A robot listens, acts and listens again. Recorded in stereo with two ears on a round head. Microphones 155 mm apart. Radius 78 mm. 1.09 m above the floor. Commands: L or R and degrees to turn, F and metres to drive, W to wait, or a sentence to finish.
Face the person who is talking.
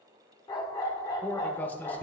L30
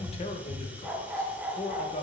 L135
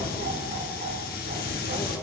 W
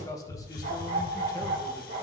L20
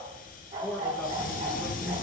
Found it: a man speaking, straight ahead.